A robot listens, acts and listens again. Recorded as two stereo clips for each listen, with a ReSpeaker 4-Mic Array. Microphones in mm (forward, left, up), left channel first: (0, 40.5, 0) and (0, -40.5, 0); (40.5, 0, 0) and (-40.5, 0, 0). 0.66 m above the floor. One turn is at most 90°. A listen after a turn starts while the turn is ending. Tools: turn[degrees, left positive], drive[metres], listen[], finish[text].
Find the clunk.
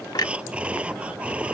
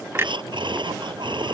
Thought: The clunk: 125° left.
Action: turn[90]
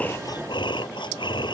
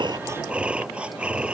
Thought: Nothing new. It was at 35° left.
Action: turn[35]
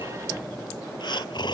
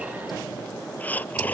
Action: finish[I heard a clunk from this way, but can't make it out now.]